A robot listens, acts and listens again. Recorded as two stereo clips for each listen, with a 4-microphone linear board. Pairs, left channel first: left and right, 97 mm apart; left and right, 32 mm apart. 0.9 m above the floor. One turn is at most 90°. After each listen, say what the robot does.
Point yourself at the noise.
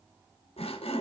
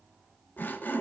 Turn 90° left.
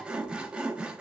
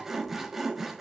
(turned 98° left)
Turn 10° right.
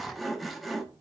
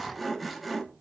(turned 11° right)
Facing the sawing.